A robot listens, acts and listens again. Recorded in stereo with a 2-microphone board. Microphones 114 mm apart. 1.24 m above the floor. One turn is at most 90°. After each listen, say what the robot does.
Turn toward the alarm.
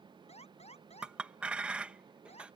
Turn 70° left.
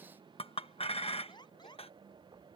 Turn 40° left.
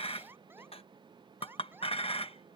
Turn 20° right.
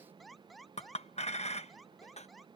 Found it: an alarm, straight ahead.